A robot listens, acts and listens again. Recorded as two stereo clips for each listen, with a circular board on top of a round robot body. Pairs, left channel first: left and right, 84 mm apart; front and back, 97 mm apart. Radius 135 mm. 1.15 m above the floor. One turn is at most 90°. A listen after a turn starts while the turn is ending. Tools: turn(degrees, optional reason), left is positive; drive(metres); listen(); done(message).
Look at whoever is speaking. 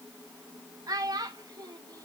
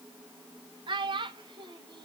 turn(degrees=-90, reason="The child speaking: 140° right.")
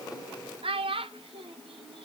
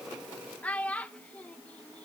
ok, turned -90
turn(degrees=-80, reason="The child speaking is now 80° right.")
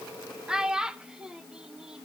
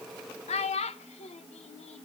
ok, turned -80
done("Facing the child speaking.")